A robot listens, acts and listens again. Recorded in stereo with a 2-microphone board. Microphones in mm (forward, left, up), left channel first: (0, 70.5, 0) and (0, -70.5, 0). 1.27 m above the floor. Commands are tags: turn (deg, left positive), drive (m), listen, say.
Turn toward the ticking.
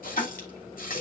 <turn deg="50"/>
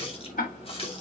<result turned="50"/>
<turn deg="80"/>
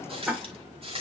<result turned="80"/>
<say>Facing the ticking, 2 to 4 m away.</say>